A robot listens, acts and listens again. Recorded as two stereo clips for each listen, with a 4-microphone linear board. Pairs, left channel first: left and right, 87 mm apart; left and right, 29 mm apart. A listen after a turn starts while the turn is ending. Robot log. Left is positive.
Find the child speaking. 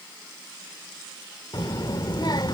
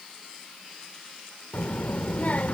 note: The child speaking: about 50° left or 130° left.
cmd yaw +50
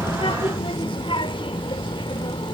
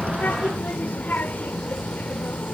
note: So it is at 75° left.
cmd yaw +75
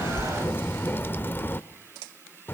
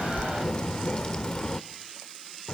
note: The child speaking is now 25° left.
cmd yaw +25
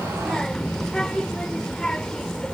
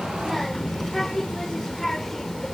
note: The child speaking is now 10° left.
cmd yaw +10
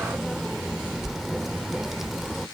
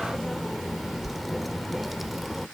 end: Facing the child speaking, under 1 m away.